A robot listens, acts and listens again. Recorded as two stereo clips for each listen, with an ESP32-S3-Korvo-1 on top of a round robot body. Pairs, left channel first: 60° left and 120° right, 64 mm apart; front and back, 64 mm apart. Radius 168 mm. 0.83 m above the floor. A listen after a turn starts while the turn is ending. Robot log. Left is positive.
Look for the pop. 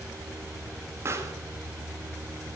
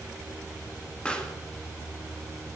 note: The pop: 75° right.
cmd yaw -75
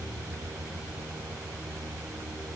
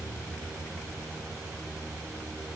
end: Facing where the pop came from. I can't hear it now.